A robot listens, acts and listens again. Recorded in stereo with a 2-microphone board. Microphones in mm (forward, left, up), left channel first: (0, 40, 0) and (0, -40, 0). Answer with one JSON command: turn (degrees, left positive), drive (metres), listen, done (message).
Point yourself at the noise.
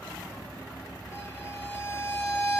{"turn": 40}
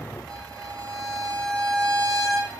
{"turn": 10}
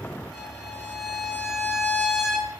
{"done": "Facing the violin, 2 to 4 m away."}